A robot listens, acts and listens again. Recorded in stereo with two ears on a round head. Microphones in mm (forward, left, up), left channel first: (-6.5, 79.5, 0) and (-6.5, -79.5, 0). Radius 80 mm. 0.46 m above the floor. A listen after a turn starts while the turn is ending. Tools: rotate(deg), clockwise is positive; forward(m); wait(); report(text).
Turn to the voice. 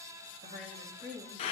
rotate(50)
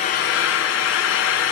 wait()
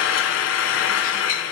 wait()
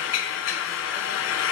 report("I heard a woman speaking, but can't make it out now. It was about straight ahead or 80° right.")